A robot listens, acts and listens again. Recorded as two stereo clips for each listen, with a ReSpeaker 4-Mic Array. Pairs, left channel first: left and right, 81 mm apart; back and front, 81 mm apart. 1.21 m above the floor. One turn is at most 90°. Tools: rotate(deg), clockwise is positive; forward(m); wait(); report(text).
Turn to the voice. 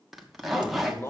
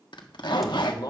rotate(-90)
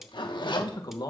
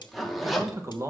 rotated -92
rotate(-55)
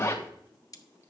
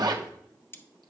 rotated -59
wait()
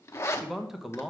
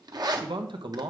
report("Facing the man speaking, 1 to 2 m away.")